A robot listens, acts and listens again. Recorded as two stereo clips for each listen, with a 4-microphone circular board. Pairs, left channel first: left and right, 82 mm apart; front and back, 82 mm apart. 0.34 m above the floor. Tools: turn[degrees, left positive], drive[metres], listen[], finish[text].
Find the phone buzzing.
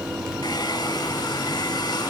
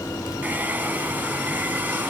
Action: listen[]
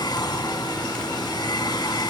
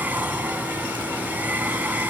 Action: listen[]
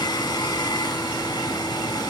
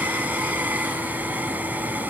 Action: finish[I can't make out a phone buzzing, only a hair dryer.]